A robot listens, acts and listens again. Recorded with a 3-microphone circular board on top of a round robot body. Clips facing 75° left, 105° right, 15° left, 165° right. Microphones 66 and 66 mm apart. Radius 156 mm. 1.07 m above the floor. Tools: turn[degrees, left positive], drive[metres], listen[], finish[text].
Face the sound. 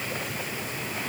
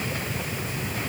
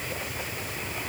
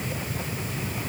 Action: listen[]
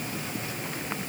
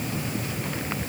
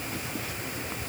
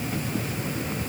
Action: listen[]
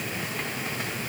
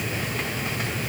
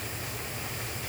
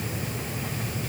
Action: finish[I can't make out anything.]